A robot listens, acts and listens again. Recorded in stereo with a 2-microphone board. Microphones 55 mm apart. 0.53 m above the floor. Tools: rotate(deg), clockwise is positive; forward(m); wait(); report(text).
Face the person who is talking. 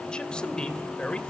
rotate(-20)
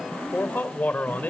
rotate(-145)
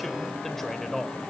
report("Found it: a man speaking, straight ahead.")